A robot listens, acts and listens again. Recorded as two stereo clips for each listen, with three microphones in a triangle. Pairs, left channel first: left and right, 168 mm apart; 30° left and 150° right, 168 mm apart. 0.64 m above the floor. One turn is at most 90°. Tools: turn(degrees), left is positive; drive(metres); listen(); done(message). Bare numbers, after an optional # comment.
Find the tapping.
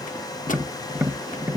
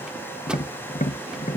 # The tapping: 10° right.
turn(-10)
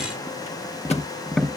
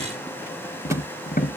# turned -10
done("Found it: tapping, straight ahead.")